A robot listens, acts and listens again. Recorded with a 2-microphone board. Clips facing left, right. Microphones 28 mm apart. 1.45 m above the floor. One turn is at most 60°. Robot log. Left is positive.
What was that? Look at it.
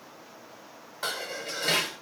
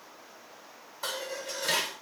cmd yaw +60
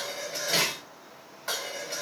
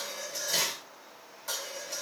note: So it is at 40° left.
cmd yaw +40
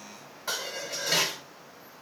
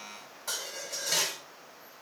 note: The dishes clattering is now 20° left.
cmd yaw +20
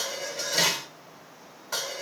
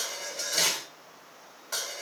end: Facing the dishes clattering, over 4 m away.